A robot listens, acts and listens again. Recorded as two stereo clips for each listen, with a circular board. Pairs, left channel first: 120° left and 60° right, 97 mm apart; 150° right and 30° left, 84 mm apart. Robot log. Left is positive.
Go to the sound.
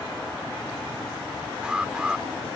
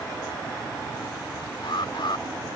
note: The alarm: 140° right.
cmd yaw -140
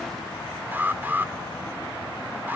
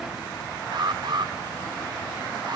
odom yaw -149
note: The alarm is now 10° left.
cmd yaw +10
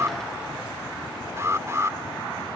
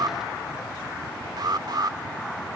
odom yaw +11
cmd fwd 1.0
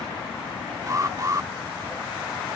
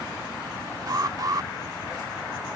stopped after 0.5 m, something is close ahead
note: The alarm is now 10° right.
cmd yaw -10
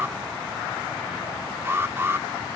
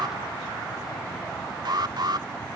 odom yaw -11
end: Blocked. The alarm is further on, straight ahead.